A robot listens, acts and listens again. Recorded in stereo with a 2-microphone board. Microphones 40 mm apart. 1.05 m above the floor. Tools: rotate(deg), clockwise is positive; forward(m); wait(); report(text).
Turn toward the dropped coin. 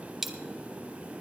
rotate(30)
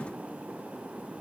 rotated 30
wait()
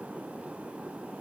report("I heard a dropped coin, but can't make it out now. It was about 25° left or 145° right.")